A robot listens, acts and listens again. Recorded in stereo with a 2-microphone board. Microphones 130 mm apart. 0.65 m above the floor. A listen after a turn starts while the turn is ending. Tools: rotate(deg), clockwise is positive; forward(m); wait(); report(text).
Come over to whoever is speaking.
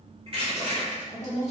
rotate(-55)
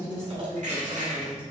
rotate(-50)
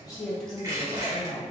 forward(1.0)
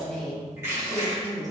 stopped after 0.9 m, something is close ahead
rotate(-10)
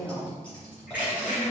report("I am next to the woman speaking.")